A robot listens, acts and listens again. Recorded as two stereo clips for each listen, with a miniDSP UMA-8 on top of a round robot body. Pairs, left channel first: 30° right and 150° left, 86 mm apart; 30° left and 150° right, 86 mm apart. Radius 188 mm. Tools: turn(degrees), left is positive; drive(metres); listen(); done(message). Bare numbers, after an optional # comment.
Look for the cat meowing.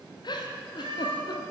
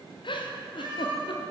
# The cat meowing: 175° left.
turn(175)
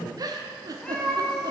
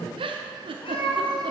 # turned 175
# The cat meowing is now 60° left.
turn(60)
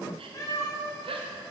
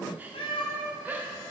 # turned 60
# The cat meowing is now 30° left.
turn(30)
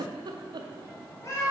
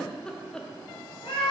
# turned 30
# The cat meowing is now 25° left.
turn(25)
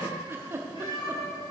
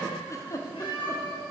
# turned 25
done("Facing the cat meowing, 2 to 4 m away.")